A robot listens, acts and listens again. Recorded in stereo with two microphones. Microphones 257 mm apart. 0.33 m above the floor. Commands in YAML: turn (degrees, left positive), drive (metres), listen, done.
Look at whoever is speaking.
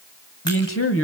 turn: 55
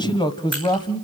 turn: 20
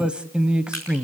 done: "Facing the man speaking, 1 to 2 m away."